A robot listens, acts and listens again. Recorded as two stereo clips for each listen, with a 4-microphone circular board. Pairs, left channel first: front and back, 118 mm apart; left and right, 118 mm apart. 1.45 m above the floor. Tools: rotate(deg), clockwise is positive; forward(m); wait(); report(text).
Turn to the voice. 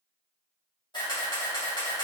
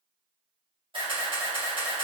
wait()
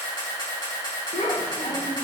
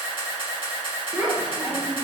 rotate(10)
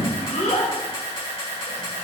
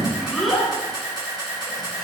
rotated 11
report("Found it: a child speaking, straight ahead.")